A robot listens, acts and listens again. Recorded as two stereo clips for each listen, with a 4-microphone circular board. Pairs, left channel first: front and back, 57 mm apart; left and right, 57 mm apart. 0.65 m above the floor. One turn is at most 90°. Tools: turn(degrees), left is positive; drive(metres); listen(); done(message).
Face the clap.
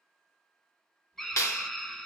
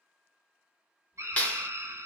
turn(degrees=25)
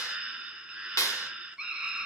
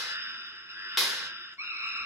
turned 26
done("Facing the clap, 1 to 2 m away.")